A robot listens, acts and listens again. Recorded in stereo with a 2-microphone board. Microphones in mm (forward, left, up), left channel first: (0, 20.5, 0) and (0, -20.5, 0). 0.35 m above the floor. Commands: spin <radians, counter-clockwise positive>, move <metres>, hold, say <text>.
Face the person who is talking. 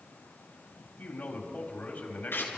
spin 0.87
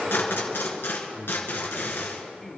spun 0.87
spin 0.26
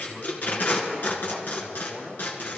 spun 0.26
say Found it: a man speaking, straight ahead.